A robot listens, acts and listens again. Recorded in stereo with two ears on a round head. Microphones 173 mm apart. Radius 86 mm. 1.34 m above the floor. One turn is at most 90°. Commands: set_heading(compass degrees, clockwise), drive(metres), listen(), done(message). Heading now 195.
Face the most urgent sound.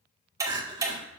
set_heading(220)
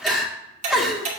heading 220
done("Found it: crying, straight ahead, 1 to 2 m away.")